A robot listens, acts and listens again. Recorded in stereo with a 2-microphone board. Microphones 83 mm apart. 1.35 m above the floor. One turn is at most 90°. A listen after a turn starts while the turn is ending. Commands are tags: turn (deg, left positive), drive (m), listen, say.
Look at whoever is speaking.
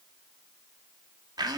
<listen/>
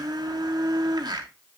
<listen/>
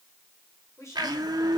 <turn deg="35"/>
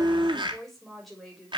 <say>Facing the woman speaking, over 4 m away.</say>